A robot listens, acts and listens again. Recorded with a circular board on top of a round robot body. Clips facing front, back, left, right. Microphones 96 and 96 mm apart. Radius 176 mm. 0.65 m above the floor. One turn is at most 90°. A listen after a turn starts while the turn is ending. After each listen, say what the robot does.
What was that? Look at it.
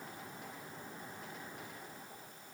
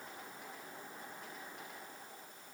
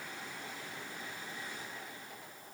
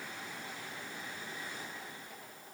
Keep listening.
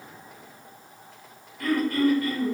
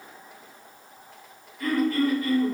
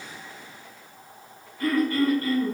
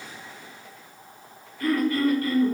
Turn 40° left.
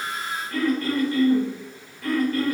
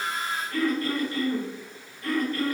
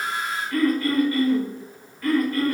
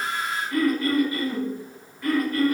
Turn 10° right.
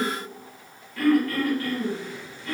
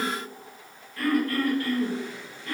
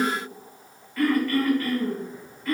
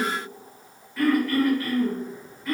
Found it: throat clearing, straight ahead.